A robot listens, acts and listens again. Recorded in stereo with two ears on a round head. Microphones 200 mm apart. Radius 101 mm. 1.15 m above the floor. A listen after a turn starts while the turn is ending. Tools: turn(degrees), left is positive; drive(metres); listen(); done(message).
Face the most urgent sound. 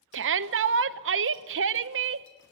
turn(degrees=-60)
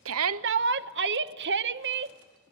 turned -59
turn(degrees=-55)
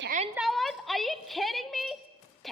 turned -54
done("Found it: a shout, straight ahead, under 1 m away.")